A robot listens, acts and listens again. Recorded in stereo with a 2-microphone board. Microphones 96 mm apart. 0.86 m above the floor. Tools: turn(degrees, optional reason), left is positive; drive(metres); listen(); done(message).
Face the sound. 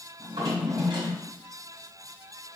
turn(degrees=-75, reason="The drawer: about 75° right or 105° right.")
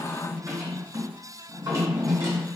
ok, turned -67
turn(degrees=-40, reason="So it is at 40° right.")
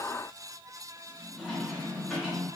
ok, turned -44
done("Found it: a drawer, straight ahead.")